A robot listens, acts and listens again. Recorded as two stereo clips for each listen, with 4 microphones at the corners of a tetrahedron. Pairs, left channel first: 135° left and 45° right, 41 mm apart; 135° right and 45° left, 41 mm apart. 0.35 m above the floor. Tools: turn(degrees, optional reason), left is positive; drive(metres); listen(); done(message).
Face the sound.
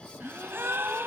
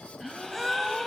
turn(degrees=-45, reason="The gasp: 45° right.")
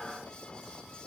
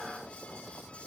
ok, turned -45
done("I heard a gasp from this way, but can't make it out now.")